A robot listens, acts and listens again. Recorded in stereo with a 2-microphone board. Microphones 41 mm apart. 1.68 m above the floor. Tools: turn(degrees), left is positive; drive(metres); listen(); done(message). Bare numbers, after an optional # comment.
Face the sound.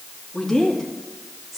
turn(30)
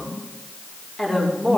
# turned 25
turn(30)
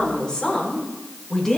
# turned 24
turn(30)
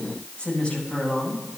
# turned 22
# So it is at 155° left.
turn(155)
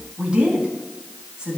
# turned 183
# The woman speaking is now 25° right.
turn(-25)
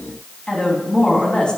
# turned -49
# The woman speaking is now 20° left.
turn(20)
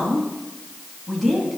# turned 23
done("Facing the woman speaking.")